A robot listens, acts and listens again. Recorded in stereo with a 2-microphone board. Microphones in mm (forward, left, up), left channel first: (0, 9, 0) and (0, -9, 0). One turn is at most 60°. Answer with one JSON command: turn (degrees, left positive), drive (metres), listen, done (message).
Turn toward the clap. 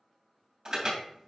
{"listen": true}
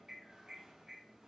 {"listen": true}
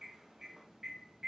{"done": "I can't make out a clap, only an alarm."}